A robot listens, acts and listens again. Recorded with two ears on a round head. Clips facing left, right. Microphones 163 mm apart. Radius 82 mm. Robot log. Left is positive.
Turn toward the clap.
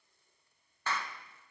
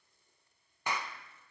cmd yaw -30
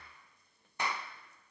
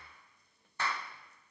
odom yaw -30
note: So it is at 15° left.
cmd yaw +15
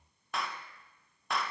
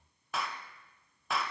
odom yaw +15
end: Found it: a clap, straight ahead.